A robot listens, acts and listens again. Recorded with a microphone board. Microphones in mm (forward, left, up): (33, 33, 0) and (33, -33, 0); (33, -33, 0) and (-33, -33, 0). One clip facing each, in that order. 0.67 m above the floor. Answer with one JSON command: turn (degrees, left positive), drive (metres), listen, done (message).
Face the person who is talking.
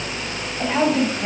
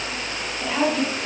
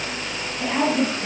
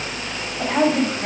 {"turn": 140}
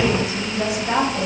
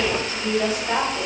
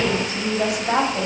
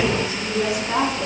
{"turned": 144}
{"turn": 15}
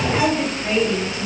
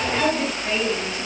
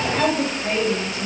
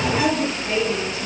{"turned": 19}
{"done": "Found it: a woman speaking, straight ahead, over 4 m away."}